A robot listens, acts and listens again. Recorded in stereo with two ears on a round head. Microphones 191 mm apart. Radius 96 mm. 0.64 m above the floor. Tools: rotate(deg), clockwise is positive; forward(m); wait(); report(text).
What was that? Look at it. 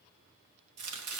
rotate(90)
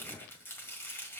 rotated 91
rotate(-10)
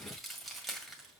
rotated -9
report("Found it: chopping, straight ahead, 1 to 2 m away.")